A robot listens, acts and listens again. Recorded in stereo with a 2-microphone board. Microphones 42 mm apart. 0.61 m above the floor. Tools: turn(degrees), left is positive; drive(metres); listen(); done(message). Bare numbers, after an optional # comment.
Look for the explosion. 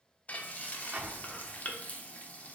# The explosion: about 35° right or 145° right.
turn(-35)
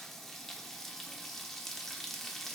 listen()
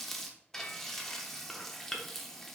done("I heard an explosion, but can't make it out now. It was about straight ahead or 110° right.")